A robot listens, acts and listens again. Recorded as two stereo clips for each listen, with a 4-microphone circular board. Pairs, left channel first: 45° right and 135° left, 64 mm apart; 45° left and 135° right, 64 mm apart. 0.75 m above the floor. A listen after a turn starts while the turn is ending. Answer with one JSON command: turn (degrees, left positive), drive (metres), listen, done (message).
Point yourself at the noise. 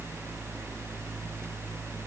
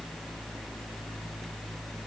{"listen": true}
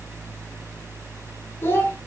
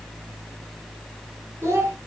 {"turn": -100}
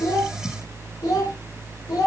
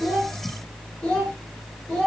{"turn": -35}
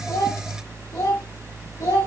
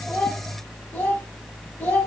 {"turn": -10}
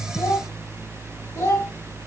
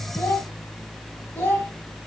{"done": "Facing the child speaking, 2 to 4 m away."}